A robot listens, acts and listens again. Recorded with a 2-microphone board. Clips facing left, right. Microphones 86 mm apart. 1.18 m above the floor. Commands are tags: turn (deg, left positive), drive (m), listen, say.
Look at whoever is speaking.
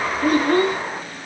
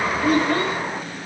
<turn deg="55"/>
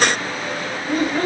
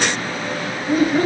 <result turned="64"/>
<say>Facing the child speaking, under 1 m away.</say>